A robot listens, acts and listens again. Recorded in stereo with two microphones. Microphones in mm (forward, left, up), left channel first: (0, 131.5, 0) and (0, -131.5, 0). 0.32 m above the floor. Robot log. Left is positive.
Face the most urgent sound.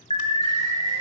note: The alarm: about 25° left or 155° left.
cmd yaw +25
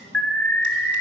end: Facing the alarm, 1 to 2 m away.